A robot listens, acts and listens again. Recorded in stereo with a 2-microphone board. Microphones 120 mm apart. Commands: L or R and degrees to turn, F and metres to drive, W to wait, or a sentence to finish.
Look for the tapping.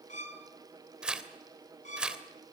W
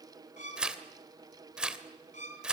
W
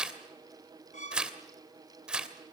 I can't make out tapping, only a violin and tearing paper.